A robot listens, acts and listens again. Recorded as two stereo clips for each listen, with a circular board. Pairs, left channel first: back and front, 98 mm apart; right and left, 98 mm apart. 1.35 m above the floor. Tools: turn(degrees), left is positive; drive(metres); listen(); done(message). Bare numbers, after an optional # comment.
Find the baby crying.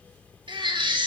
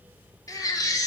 # The baby crying: 35° right.
turn(-35)
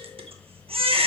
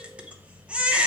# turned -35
# The baby crying is now 15° left.
turn(15)
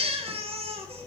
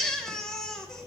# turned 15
done("Facing the baby crying, under 1 m away.")